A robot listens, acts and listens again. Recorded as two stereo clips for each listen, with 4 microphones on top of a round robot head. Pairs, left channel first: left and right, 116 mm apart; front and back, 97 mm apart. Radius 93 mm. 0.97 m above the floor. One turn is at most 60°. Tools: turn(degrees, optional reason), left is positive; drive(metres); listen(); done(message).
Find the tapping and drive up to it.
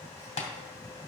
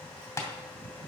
turn(degrees=60, reason="The tapping: 60° left.")
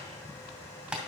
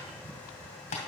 turn(degrees=-10, reason="The tapping is now 10° right.")
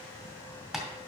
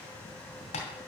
drive(metres=1.0)
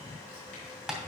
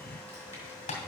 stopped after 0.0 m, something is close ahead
done("Something is in my way. I am facing the tapping but have not reached it.")